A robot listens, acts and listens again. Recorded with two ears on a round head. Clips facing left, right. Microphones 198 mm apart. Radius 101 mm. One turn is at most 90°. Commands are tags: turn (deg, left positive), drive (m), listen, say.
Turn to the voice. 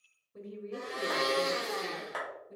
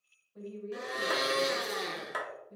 <turn deg="50"/>
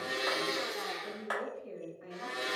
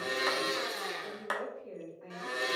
<turn deg="15"/>
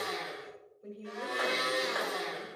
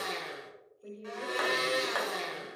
<say>Facing the woman speaking.</say>